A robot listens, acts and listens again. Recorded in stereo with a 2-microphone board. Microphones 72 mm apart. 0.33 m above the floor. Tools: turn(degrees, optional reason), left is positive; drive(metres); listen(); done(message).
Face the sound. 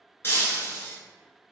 turn(degrees=35, reason="The breaking glass: about 35° left or 145° left.")
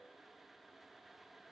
listen()
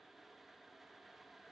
done("I heard breaking glass, but can't make it out now. It was about straight ahead or 110° left.")